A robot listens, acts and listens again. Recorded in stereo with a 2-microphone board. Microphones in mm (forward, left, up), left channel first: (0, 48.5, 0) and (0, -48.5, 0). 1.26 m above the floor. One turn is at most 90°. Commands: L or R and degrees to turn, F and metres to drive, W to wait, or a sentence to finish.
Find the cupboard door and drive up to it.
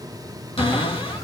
L90
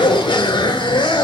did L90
W
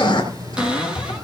R10
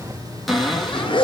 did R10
F1.0
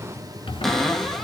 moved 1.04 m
F1.0
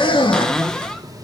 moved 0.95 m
L10
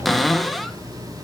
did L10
F1.0
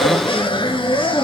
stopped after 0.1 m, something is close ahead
W
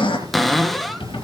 Arrived at the cupboard door, straight ahead.